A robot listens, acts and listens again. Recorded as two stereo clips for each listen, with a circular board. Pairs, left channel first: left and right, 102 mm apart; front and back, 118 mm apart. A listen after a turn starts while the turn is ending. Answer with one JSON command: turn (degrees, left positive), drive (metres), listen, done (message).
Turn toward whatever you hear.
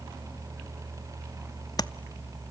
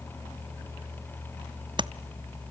{"turn": 135}
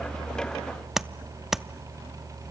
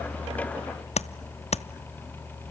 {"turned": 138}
{"done": "Found it: tapping, straight ahead."}